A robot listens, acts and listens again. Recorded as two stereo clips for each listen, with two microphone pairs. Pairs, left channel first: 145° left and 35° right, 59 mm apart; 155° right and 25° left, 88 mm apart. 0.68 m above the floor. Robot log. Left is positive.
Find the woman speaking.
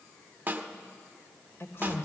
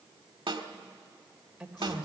note: The woman speaking: 110° left.
cmd yaw +110
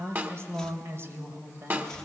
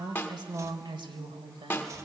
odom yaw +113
note: The woman speaking is now 10° left.
cmd yaw +10
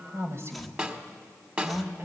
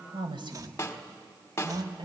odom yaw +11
note: The woman speaking is now 15° left.
cmd yaw +15
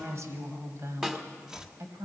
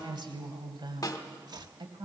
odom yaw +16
end: Found it: a woman speaking, straight ahead, 2 to 4 m away.